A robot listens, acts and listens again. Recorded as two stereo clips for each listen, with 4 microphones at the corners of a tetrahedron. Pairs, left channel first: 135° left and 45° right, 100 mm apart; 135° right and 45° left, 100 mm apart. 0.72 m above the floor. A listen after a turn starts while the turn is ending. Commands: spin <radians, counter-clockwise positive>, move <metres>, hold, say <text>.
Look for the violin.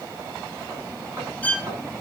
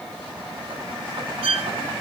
spin 1.05
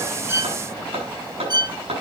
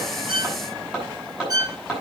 say Facing the violin.